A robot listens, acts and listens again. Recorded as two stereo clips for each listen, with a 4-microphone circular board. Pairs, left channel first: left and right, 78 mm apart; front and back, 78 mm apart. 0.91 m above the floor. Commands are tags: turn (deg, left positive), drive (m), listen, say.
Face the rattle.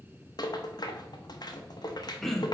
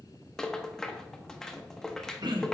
<turn deg="85"/>
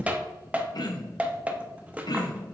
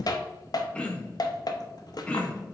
<turn deg="-20"/>
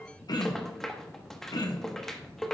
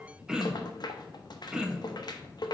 <say>Facing the rattle, under 1 m away.</say>